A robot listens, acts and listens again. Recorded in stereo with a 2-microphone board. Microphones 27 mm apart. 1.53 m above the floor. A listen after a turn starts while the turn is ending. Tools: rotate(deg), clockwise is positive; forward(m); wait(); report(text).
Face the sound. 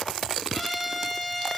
rotate(-30)
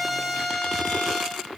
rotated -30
rotate(-135)
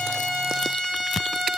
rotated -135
rotate(-25)
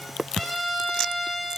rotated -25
report("Found it: a trumpet, straight ahead.")